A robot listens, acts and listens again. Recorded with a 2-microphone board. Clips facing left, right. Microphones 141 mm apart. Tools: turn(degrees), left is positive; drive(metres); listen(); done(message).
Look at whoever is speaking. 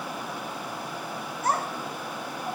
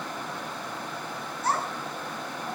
turn(degrees=50)
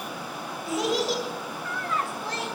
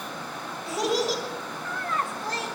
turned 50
done("Facing the child speaking, 2 to 4 m away.")